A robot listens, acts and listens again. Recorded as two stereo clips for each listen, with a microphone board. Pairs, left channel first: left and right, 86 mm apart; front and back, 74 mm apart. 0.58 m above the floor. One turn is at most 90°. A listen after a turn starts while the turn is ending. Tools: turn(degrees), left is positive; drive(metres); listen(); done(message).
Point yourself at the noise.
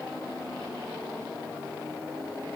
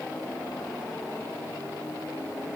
listen()
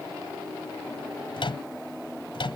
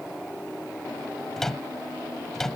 turn(degrees=85)
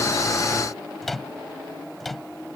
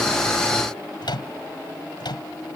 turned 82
done("Found it: a microwave, straight ahead.")